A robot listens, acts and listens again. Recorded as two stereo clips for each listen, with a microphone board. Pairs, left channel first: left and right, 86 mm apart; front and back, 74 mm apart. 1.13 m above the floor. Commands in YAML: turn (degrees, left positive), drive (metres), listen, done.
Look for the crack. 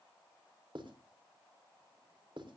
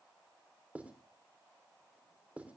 listen: true
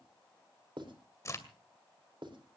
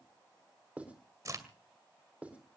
turn: 140
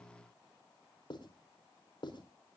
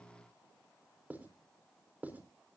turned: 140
done: "Facing where the crack came from. I can't hear it now."